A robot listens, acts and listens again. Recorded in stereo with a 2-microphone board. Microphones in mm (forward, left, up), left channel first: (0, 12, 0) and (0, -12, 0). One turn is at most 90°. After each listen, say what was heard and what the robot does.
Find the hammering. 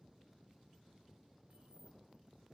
Keep listening.
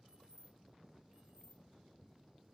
Keep listening.
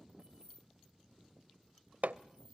The hammering: about 70° right or 110° right. Turn 70° right.
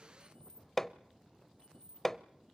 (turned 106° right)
So it is at 15° left. Turn 15° left.
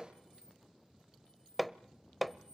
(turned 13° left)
Facing the hammering.